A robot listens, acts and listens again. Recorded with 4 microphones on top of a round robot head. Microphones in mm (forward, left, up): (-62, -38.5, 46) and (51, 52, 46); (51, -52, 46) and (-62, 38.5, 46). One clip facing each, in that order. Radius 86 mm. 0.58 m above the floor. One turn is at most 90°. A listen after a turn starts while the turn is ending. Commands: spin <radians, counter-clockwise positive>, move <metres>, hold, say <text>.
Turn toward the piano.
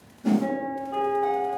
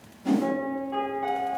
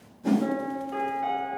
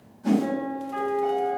spin -0.79
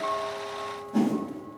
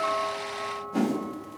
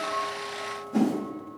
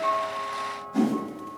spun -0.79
spin 0.17
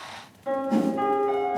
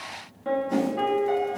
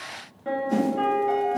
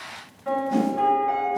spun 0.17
say Facing the piano.